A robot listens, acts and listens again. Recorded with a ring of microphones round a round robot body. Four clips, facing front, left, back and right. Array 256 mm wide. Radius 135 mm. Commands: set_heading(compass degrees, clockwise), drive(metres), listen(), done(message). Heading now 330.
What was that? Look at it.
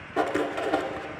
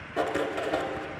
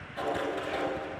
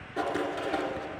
set_heading(320)
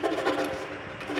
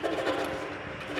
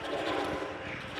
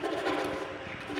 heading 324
done("Found it: writing, straight ahead.")